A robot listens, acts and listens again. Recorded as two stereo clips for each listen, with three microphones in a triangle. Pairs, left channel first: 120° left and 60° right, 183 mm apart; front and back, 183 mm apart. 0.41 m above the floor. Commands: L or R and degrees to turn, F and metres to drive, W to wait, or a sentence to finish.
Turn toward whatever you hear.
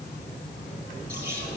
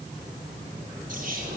R140
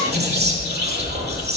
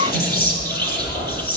R35
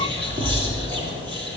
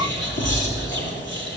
Facing the whispering.